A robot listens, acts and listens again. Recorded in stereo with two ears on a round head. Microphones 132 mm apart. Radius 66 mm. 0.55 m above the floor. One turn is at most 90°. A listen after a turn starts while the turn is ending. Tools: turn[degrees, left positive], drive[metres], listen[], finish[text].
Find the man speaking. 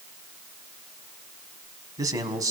Thought: The man speaking: about 25° right or 155° right.
Action: turn[-25]
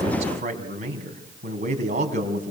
Thought: So it is at 130° right.
Action: turn[-90]
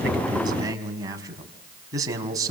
Thought: The man speaking is now 25° right.
Action: turn[-25]
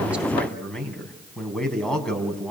Action: finish[Found it: a man speaking, straight ahead.]